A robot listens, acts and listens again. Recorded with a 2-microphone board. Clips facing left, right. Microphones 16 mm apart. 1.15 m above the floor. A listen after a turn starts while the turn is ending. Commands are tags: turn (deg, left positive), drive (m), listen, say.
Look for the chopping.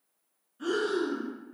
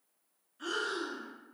<listen/>
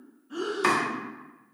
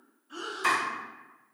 <turn deg="25"/>
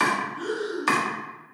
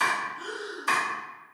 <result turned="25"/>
<turn deg="125"/>
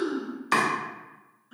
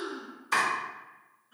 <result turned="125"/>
<turn deg="60"/>
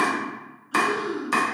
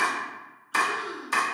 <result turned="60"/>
<turn deg="20"/>
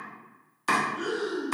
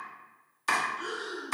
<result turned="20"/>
<say>Facing the chopping, under 1 m away.</say>